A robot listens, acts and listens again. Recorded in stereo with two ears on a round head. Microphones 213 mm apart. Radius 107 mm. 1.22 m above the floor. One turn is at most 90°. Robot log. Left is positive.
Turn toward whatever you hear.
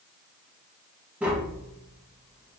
cmd yaw -30
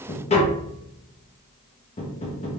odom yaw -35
note: So it is at 25° left.
cmd yaw +25
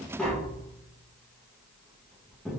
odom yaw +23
end: Facing the tapping, under 1 m away.